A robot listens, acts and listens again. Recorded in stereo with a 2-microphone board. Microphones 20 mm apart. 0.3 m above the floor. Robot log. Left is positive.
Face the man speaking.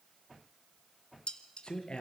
note: The man speaking: about 55° left or 125° left.
cmd yaw +55
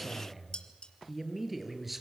end: Facing the man speaking, over 4 m away.